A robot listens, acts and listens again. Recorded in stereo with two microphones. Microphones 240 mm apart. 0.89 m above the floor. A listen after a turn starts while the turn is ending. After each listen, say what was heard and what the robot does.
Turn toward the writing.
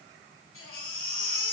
Keep listening.
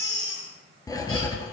The writing: about 15° left or 165° left. Turn 15° left.
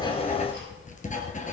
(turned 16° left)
So it is at 150° left. Turn 150° left.
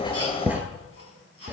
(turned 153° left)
Facing the writing.